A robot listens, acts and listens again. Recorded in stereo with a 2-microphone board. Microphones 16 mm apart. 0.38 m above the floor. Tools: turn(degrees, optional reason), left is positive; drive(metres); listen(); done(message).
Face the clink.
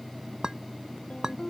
turn(degrees=-45, reason="The clink: about 45° right or 135° right.")
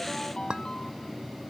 turn(degrees=-90, reason="So it is at 90° right.")
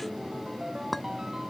done("Facing the clink.")